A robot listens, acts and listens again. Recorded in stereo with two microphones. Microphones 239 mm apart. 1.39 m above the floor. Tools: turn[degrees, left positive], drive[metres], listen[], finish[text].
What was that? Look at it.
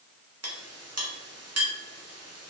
Thought: The clink: about 75° right or 105° right.
Action: turn[-75]
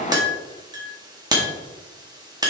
Thought: So it is at 15° right.
Action: turn[-15]
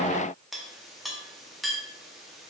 Action: finish[Facing the clink, 1 to 2 m away.]